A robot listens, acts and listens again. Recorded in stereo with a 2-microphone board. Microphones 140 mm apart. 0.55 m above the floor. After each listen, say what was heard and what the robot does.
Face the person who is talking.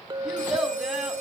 Turn 30° right.
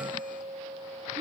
Keep listening.
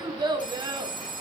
So it is at 145° right. Turn 145° right.
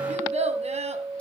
The child speaking is now 55° right. Turn 55° right.
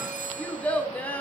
The child speaking is now 10° left. Turn 10° left.
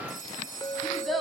Facing the child speaking.